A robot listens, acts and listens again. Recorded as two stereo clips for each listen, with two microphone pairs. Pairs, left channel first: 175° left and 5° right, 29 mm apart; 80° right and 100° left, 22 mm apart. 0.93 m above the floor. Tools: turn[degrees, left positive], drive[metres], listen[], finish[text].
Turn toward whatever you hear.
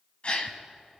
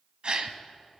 Thought: The gasp: 145° left.
Action: turn[145]
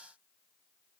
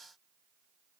Action: finish[Facing where the gasp came from. I can't hear it now.]